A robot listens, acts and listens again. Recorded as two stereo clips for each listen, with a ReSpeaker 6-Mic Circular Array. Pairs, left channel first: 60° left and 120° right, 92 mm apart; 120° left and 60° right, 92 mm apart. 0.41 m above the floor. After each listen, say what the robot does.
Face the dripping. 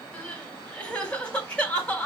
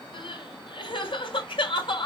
Keep listening.
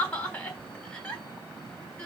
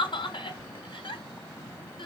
Keep listening.
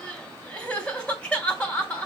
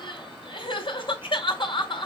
I can't make out dripping to turn to.